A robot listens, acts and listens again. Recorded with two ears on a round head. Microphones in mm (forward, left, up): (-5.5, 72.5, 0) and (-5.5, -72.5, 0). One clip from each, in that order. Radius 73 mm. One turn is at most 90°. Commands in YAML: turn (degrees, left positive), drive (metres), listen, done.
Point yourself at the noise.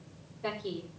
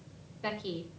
turn: -50
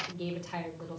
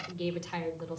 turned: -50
turn: -75
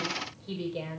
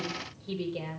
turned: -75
done: "Found it: a woman speaking, straight ahead."